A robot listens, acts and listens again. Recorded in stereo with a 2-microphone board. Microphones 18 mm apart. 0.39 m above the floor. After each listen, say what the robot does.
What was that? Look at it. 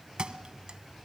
Turn 60° right.
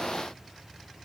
Keep listening.
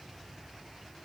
I heard a thud, but can't make it out now. It was about straight ahead or 60° right.